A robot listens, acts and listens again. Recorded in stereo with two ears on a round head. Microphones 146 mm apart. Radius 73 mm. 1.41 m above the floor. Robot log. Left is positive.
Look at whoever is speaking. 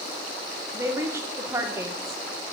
note: The woman speaking: about 20° right or 160° right.
cmd yaw -20
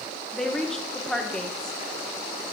end: Found it: a woman speaking, straight ahead, under 1 m away.